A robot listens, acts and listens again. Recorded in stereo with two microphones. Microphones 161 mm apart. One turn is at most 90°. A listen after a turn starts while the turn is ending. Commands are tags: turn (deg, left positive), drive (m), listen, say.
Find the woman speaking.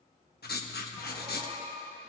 <listen/>
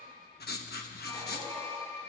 <listen/>
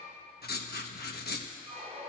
<say>I can't make out a woman speaking to turn to.</say>